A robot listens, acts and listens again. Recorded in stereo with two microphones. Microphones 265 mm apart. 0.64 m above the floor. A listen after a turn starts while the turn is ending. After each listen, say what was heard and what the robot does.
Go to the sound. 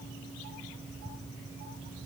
Keep listening.
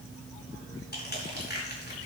The crushing: about 40° left or 140° left. Turn 40° left.
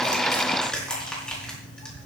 Drive 1.0 m forward.
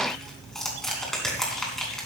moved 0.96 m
Drive 1.0 m forward.
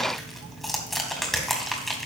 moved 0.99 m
Drive 1.0 m forward.
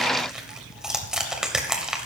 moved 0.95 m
Drive 1.0 m forward.
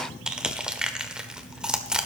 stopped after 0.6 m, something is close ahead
I am next to the crushing.